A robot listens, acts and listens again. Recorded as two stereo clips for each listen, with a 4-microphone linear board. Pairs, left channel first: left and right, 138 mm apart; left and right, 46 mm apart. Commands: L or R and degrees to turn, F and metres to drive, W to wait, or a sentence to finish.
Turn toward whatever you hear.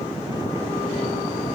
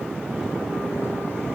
W
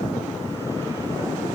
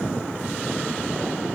W
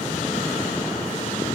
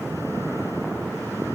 I can't make out anything.